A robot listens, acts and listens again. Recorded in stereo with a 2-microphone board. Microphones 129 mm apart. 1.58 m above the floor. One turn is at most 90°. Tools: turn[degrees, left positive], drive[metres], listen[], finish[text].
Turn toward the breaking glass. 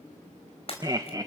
Thought: The breaking glass: about 45° left or 135° left.
Action: turn[45]
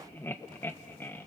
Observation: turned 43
Action: listen[]
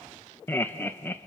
Action: finish[I heard breaking glass, but can't make it out now. It was about straight ahead or 90° left.]